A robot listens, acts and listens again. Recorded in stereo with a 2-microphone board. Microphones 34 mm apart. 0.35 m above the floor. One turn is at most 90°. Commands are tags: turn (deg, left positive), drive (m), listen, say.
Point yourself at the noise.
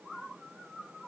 <listen/>
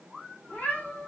<turn deg="55"/>
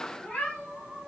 <turn deg="25"/>
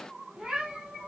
<turn deg="-20"/>
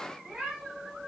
<turn deg="-10"/>
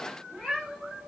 <say>Facing the cat meowing, 2 to 4 m away.</say>